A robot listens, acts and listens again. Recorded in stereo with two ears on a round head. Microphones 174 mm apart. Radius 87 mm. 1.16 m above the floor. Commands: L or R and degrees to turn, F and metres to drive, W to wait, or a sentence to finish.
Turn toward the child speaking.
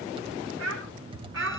R90
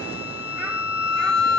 W
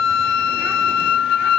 W
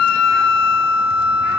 I heard a child speaking from this way, but can't make it out now.